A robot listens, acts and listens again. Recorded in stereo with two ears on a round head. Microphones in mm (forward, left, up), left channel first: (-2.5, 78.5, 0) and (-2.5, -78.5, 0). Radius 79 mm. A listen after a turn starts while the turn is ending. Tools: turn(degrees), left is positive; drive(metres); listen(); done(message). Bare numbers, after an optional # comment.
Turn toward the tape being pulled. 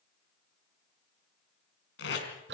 # The tape being pulled: about 70° left or 110° left.
turn(70)
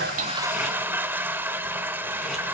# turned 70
listen()
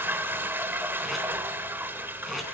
listen()
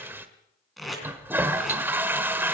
done("Facing the tape being pulled, over 4 m away.")